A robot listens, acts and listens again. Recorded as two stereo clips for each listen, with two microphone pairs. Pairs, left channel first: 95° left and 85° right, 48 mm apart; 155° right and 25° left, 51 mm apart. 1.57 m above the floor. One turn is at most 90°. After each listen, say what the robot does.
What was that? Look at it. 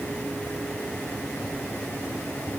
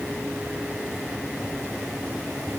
Keep listening.
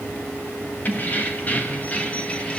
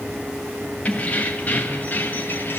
Turn 90° left.
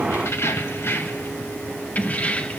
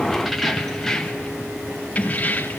Turn 90° left.
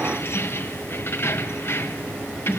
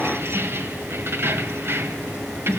Turn 60° left.
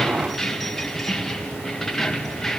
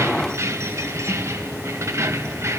Turn 10° left.
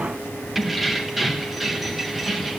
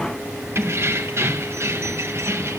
Found it: keys jangling, straight ahead, 1 to 2 m away.